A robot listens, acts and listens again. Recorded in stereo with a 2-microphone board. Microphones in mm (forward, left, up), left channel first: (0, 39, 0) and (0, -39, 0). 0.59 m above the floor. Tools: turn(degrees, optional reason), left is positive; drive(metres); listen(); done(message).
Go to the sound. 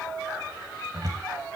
turn(degrees=-50, reason="The cupboard door: about 50° right or 130° right.")
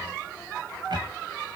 listen()
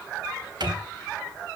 turn(degrees=-75, reason="So it is at 75° right.")
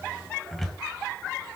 drive(metres=1.0)
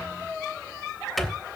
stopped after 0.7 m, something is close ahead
done("Something is in my way. I am facing the cupboard door but have not reached it.")